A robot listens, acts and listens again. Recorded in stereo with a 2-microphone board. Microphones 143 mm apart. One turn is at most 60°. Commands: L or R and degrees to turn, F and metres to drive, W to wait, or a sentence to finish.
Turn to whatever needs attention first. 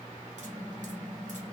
W
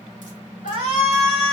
R45
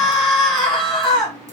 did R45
Facing the shout, 1 to 2 m away.